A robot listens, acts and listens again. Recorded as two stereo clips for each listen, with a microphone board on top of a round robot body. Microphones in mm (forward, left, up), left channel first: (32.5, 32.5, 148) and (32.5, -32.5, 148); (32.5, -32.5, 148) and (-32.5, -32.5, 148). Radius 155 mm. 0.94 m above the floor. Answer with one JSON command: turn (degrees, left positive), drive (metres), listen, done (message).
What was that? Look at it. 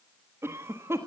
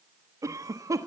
{"turn": -145}
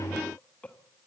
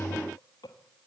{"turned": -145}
{"turn": 20}
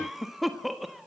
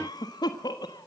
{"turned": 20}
{"done": "Facing the cough."}